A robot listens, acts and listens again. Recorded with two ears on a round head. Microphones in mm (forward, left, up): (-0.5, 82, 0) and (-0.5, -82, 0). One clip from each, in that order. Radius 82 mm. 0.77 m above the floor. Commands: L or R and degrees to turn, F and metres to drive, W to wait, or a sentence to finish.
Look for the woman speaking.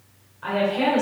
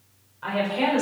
R20
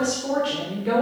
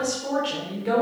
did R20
R15
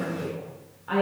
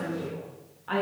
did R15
R15
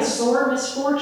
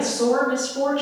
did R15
R20
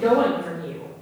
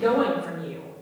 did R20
R30
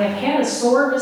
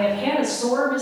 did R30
Facing the woman speaking.